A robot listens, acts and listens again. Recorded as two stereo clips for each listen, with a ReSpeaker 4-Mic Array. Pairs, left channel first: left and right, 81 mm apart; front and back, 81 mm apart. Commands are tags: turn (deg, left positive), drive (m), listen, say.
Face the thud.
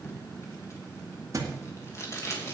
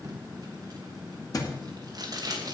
<turn deg="-40"/>
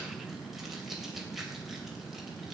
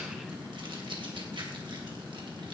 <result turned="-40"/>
<say>Facing where the thud came from. I can't hear it now.</say>